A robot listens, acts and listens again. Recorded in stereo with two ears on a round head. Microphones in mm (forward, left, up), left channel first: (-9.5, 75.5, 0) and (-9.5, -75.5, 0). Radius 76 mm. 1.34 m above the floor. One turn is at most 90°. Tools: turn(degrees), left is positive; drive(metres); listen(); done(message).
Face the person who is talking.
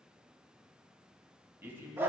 turn(degrees=-30)
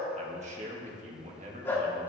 turn(degrees=-90)
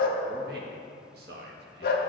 turn(degrees=-60)
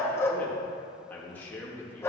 turn(degrees=10)
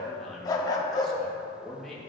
done("Facing the man speaking.")